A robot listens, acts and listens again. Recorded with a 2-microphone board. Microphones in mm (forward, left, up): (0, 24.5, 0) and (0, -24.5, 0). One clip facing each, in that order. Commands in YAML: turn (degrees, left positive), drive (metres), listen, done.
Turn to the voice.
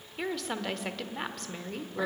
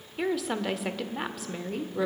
turn: -30
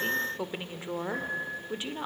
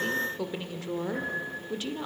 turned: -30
turn: 25
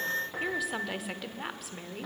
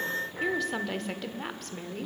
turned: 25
done: "Facing the woman speaking, 1 to 2 m away."